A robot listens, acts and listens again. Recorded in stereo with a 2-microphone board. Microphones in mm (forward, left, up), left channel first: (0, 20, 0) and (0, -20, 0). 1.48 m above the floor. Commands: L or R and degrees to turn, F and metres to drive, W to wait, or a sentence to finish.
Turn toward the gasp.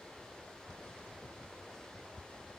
W
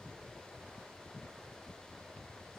W
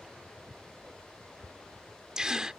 R20
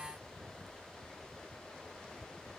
W
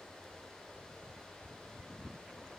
I heard a gasp, but can't make it out now. It was about straight ahead or 140° right.